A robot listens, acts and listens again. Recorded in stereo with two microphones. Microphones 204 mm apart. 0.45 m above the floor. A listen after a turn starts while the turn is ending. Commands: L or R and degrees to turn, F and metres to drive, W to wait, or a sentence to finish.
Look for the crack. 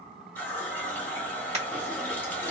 R30
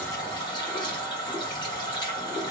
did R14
W
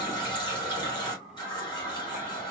I heard a crack, but can't make it out now. It was about 15° right or 135° right.